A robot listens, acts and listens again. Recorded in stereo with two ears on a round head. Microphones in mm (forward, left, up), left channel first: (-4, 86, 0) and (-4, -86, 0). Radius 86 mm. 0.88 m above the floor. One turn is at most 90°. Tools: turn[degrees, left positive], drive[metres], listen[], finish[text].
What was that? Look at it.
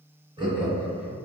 Thought: The laughter: about 35° right or 145° right.
Action: turn[-35]
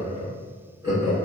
Thought: The laughter: about 25° right or 155° right.
Action: turn[-25]
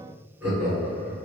Thought: So it is at 15° right.
Action: turn[-15]
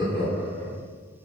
Action: finish[Found it: laughter, straight ahead, 2 to 4 m away.]